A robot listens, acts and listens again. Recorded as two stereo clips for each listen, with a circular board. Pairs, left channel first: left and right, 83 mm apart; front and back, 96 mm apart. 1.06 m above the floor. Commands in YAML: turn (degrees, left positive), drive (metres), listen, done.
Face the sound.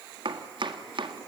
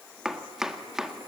turn: -95
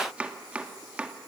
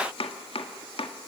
turn: -15
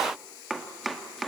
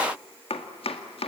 done: "Found it: chopping, straight ahead, 1 to 2 m away."